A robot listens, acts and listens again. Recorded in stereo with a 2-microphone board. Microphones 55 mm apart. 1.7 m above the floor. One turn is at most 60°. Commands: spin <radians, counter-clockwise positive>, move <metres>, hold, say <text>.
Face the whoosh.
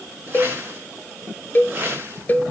spin -0.52
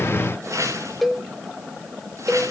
spin -1.05
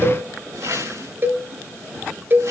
spin -1.05
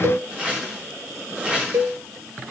spin -0.35
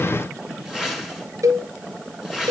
spin -0.17
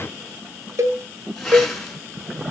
say Facing the whoosh.